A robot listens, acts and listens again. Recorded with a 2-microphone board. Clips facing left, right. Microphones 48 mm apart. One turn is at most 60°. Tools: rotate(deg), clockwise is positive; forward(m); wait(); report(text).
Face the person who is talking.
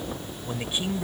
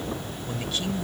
rotate(-20)
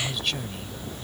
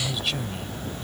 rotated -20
report("Found it: a man speaking, straight ahead.")